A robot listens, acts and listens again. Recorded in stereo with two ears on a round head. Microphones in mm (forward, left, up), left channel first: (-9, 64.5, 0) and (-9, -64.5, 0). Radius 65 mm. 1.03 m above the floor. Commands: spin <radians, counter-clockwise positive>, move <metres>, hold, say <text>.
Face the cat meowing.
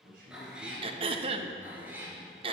spin -0.52
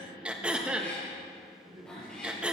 hold
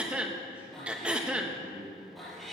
say Facing the cat meowing.